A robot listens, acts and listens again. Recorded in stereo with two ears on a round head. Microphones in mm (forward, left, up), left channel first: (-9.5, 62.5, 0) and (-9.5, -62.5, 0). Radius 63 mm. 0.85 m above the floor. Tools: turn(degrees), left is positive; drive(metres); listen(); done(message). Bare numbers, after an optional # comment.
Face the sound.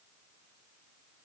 listen()
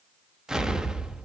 turn(-30)
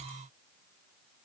listen()
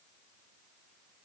done("I heard an explosion, but can't make it out now. It was about 25° left or 145° right.")